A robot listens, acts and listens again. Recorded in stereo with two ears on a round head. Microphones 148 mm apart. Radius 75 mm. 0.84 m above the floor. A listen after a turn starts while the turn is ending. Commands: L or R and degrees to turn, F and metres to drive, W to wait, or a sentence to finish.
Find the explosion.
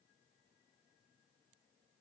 W
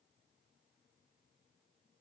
W
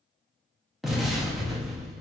L30
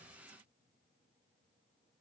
W
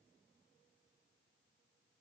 I heard an explosion, but can't make it out now. It was about 30° right or 150° left.